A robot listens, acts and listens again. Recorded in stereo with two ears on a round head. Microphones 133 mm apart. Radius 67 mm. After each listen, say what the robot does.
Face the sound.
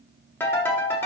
Turn 15° left.
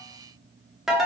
Facing the ringtone.